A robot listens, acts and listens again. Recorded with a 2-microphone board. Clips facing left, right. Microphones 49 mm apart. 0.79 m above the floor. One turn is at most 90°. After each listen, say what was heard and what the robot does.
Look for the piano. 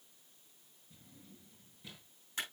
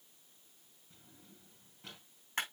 Keep listening.
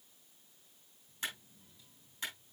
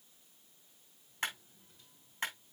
Keep listening.
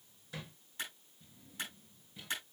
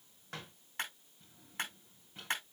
I can't make out a piano, only a clap and a drawer.